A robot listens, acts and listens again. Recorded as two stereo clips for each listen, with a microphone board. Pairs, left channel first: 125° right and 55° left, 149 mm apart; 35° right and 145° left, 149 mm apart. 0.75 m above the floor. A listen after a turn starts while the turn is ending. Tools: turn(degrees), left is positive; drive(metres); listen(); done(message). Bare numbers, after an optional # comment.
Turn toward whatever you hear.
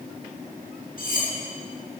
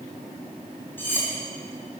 # The cutlery clinking: 110° right.
turn(-110)
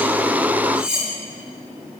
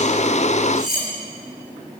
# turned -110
# The cutlery clinking is now 30° right.
turn(-30)
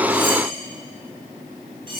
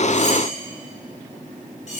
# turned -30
done("Facing the cutlery clinking.")